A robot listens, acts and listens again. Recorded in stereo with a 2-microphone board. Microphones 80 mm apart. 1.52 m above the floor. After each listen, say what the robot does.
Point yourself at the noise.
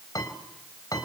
Turn 50° left.
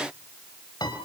Turn 75° left.
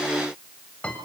Turn 15° left.
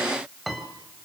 Facing the piano.